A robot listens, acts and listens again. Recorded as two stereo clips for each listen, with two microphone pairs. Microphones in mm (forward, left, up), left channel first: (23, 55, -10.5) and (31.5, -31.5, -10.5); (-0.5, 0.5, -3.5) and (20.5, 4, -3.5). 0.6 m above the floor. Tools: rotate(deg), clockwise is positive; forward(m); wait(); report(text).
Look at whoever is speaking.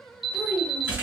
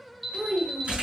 rotate(-30)
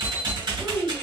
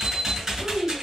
rotate(15)
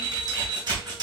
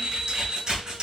wait()
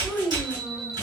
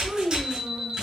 report("Facing the child speaking, 1 to 2 m away.")